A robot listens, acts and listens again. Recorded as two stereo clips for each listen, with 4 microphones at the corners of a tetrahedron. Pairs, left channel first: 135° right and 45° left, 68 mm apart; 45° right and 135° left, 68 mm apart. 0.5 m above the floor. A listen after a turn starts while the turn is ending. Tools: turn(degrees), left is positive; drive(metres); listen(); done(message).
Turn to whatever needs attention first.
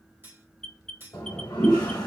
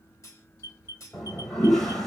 turn(degrees=-50)
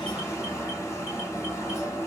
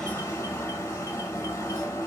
listen()
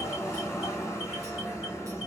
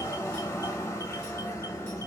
listen()
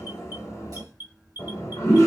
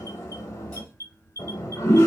turn(degrees=-10)
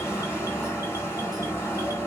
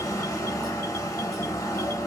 listen()
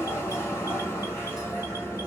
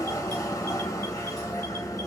listen()
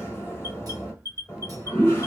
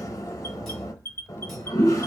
done("Found it: an alarm, straight ahead.")